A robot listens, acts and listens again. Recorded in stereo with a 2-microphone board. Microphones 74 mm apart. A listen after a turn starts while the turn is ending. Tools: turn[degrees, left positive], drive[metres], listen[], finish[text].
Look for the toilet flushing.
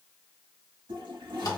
Action: turn[-90]
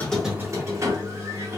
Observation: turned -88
Action: listen[]
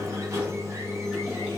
Action: listen[]
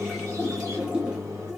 Thought: The toilet flushing is now 10° right.
Action: turn[-10]
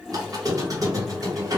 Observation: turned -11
Action: listen[]
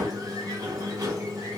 Action: listen[]
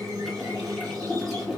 Action: finish[Facing the toilet flushing.]